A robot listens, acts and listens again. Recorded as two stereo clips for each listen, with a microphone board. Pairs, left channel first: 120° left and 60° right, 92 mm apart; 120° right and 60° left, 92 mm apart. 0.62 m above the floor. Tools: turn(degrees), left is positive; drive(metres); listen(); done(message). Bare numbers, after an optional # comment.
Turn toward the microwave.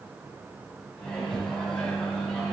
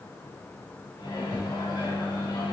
# The microwave: 160° right.
turn(-160)
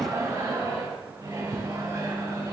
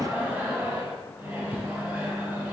done("Facing the microwave.")